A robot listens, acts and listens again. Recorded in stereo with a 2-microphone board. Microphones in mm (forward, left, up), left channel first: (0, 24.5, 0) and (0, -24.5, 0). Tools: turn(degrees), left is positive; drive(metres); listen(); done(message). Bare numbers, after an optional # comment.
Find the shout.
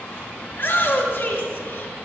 # The shout: about 40° left or 140° left.
turn(40)
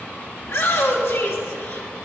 # So it is at 95° left.
turn(95)
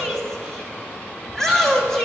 # The shout is now 10° left.
turn(10)
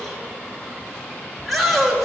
done("Found it: a shout, straight ahead.")